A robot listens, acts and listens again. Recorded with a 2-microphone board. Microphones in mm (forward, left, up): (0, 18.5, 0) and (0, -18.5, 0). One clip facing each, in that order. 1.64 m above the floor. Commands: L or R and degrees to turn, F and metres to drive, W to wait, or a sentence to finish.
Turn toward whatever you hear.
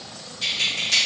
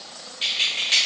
R35
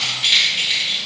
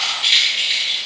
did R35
Found it: keys jangling, straight ahead.